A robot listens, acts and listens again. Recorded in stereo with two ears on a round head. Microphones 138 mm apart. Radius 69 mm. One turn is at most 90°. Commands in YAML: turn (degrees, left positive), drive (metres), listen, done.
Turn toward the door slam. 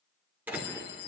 turn: -30
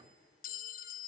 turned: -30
listen: true
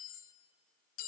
done: "I heard a door slam, but can't make it out now. It was about 20° left or 140° right."